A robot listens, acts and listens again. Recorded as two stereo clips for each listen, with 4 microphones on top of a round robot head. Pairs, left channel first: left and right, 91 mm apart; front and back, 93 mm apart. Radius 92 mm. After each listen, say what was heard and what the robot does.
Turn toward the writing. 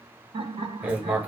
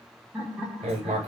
The writing: 160° right. Turn 160° right.
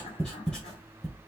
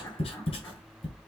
Facing the writing.